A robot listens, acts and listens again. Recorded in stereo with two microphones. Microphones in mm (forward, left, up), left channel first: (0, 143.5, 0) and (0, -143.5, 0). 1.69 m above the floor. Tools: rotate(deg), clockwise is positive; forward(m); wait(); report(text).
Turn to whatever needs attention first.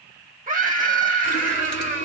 rotate(30)
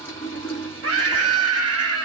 rotate(120)
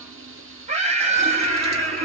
rotate(25)
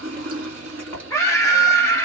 rotate(-10)
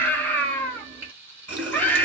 rotate(-10)
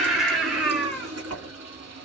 report("Found it: a scream, straight ahead.")